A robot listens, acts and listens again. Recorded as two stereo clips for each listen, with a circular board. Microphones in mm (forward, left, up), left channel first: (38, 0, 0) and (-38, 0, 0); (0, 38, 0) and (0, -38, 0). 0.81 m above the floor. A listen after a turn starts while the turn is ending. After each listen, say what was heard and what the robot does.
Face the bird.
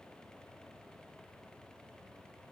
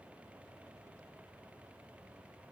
Keep listening.
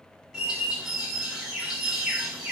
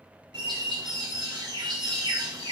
The bird: 100° right. Turn 100° right.
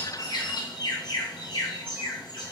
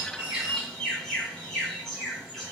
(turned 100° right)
The bird is now 10° left. Turn 10° left.
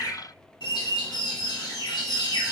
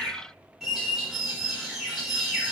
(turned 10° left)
Found it: a bird, straight ahead.